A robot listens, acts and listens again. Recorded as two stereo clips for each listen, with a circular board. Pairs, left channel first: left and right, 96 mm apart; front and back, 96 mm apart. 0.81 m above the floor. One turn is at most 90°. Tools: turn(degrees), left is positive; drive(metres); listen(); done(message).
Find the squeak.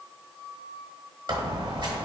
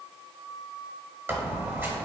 turn(degrees=-90)
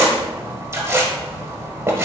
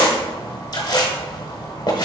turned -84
turn(degrees=-35)
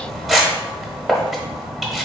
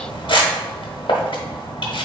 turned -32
done("Found it: a squeak, straight ahead.")